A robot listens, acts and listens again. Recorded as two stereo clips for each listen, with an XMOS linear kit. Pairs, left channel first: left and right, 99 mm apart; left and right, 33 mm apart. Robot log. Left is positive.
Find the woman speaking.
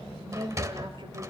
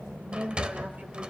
note: The woman speaking: about 60° right or 120° right.
cmd yaw -60
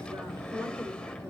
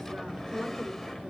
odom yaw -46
cmd idle
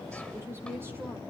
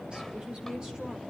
note: So it is at 25° right.
cmd yaw -25
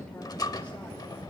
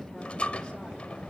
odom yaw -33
cmd idle
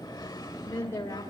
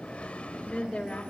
note: The woman speaking is now 30° left.
cmd yaw +30
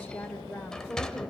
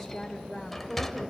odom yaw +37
end: Found it: a woman speaking, straight ahead, 1 to 2 m away.